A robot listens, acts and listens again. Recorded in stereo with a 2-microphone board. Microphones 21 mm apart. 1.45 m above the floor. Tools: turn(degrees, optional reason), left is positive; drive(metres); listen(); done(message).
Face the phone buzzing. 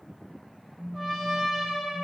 turn(degrees=-30)
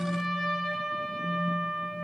turn(degrees=-140, reason="So it is at 140° right.")
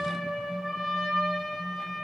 listen()
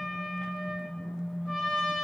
turn(degrees=10, reason="The phone buzzing is now 10° left.")
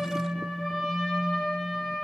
done("Found it: a phone buzzing, straight ahead.")